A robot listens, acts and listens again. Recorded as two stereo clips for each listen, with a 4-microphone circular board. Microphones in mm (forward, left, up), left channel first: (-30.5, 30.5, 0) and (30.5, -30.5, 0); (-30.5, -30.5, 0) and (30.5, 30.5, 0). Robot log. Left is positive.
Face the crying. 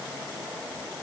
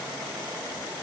cmd idle
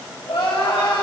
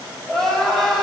note: The crying: 140° left.
cmd yaw +140
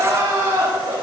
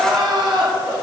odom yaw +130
note: The crying is now 10° left.
cmd yaw +10
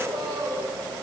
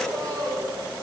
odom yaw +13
end: Found it: crying, straight ahead, 2 to 4 m away.